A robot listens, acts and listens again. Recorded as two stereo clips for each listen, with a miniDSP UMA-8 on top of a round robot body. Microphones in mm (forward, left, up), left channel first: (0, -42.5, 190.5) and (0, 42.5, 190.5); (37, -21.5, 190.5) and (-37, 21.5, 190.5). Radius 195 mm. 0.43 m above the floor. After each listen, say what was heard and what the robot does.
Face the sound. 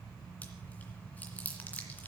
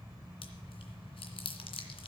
The chewing: 15° right. Turn 15° right.
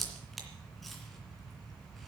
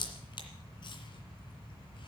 Facing the chewing.